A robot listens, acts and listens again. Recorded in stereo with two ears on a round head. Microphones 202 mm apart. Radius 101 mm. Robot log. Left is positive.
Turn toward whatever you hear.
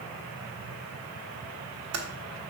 note: The typing on a keyboard: about 70° right or 110° right.
cmd yaw -70
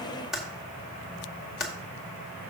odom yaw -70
end: Found it: typing on a keyboard, straight ahead.